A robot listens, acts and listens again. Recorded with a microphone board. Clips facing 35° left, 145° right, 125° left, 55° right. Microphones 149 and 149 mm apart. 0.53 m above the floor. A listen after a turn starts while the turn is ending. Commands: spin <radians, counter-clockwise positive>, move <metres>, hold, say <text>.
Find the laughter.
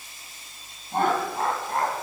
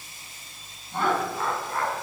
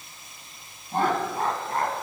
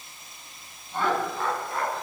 spin 1.40
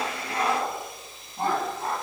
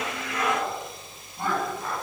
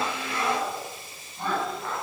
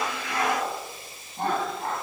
spin -0.17
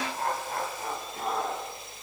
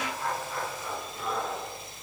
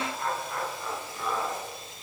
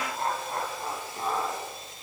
say Facing the laughter, over 4 m away.